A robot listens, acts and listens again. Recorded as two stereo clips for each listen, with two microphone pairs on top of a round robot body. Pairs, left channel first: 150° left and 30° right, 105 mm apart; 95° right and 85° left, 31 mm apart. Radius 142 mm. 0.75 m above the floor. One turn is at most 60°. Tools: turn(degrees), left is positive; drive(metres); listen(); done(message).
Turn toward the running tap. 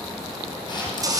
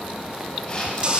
turn(degrees=25)
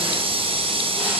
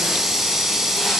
done("Found it: a running tap, straight ahead, 2 to 4 m away.")